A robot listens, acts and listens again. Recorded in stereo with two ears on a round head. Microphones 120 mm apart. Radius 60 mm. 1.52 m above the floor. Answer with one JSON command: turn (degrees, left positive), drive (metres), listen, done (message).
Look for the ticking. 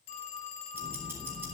{"turn": -20}
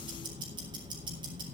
{"turn": -140}
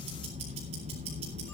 {"turn": -45}
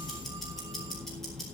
{"done": "Facing the ticking."}